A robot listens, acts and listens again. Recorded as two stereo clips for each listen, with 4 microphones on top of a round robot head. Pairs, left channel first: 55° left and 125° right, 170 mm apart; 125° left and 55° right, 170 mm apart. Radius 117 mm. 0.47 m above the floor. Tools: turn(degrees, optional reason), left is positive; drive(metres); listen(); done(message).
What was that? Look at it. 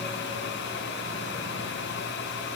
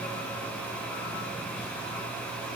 listen()
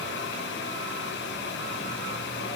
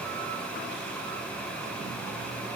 listen()
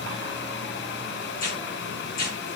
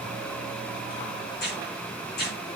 turn(degrees=95, reason="The tearing paper: 95° left.")
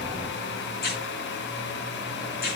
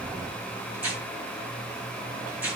turn(degrees=25, reason="The tearing paper is now 25° left.")
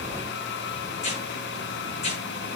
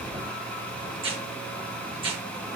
done("Facing the tearing paper, over 4 m away.")